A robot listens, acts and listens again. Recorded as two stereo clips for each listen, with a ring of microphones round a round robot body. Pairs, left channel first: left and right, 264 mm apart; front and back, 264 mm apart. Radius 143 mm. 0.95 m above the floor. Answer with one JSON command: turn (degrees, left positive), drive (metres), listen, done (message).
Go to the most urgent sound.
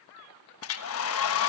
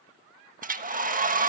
{"listen": true}
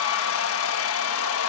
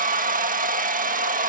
{"listen": true}
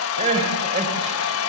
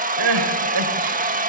{"turn": -160}
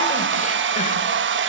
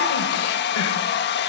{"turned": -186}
{"turn": 25}
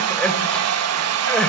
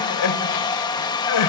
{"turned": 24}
{"drive": 1.0}
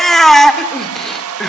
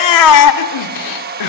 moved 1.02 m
{"drive": 1.0}
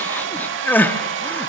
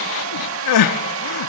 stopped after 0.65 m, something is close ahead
{"done": "Arrived at the crying, straight ahead."}